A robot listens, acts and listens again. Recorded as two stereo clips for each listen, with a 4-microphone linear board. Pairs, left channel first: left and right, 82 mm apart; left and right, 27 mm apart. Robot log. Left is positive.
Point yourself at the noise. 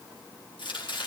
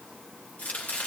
cmd yaw +90
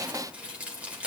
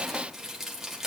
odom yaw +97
note: So it is at 15° right.
cmd yaw -15
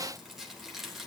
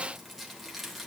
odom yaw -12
end: Found it: chopping, straight ahead.